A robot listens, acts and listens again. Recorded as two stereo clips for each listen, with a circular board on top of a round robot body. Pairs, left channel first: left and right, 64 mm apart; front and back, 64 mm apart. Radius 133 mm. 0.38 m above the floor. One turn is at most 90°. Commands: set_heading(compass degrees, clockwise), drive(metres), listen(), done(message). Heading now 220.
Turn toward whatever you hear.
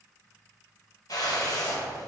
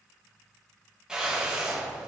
set_heading(130)
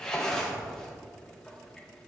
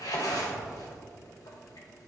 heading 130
set_heading(120)
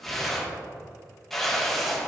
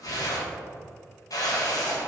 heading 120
done("Found it: a whoosh, straight ahead, 1 to 2 m away.")